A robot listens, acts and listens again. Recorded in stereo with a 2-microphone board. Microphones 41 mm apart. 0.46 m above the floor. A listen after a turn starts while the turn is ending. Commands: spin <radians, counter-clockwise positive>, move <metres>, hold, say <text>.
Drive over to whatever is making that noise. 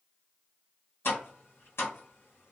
spin 1.31
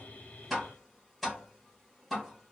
move 1.0
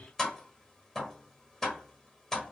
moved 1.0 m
spin 0.26
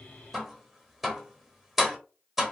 move 1.0
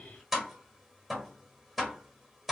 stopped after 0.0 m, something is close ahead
say I am next to the tapping.